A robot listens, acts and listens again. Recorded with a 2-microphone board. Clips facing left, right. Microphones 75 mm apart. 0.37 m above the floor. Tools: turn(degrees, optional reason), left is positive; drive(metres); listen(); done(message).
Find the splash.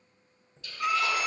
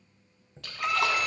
turn(degrees=-70, reason="The splash: about 70° right or 110° right.")
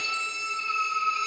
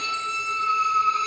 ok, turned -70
listen()
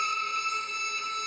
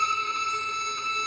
done("I heard a splash, but can't make it out now. It was about straight ahead or 40° right.")